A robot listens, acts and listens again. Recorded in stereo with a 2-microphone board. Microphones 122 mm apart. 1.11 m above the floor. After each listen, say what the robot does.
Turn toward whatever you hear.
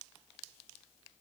Keep listening.
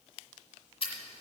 Turn 50° left.
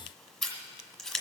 Facing the scissors.